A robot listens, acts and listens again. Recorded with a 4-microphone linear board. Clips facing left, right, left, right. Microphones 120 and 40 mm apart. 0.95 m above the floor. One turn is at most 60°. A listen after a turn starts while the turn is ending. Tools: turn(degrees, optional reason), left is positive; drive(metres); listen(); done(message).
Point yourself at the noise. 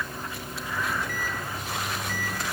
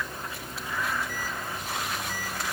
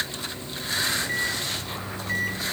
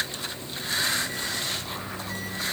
turn(degrees=60, reason="The microwave: about 60° left or 120° left.")
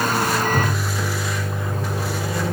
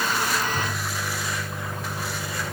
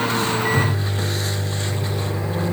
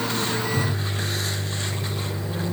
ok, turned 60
turn(degrees=60, reason="So it is at 60° left.")
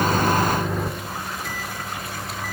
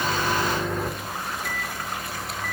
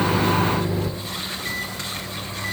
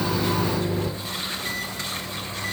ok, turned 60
done("Facing the microwave.")